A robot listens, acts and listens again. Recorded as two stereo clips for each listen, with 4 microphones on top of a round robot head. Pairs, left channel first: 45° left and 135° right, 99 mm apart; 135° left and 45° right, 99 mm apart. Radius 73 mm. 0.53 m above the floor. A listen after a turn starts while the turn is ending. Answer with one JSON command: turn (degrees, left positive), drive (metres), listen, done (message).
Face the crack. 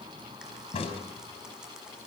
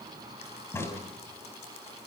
{"turn": 70}
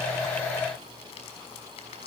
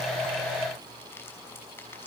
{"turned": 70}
{"done": "Facing where the crack came from. I can't hear it now."}